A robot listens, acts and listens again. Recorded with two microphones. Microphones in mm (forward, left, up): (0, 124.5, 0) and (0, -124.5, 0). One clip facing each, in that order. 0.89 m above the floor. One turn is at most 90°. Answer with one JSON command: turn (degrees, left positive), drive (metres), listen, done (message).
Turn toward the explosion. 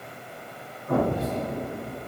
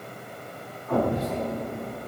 {"turn": 45}
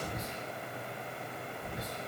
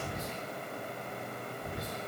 {"listen": true}
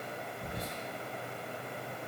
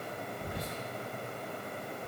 {"done": "I heard an explosion, but can't make it out now. It was about straight ahead or 90° left."}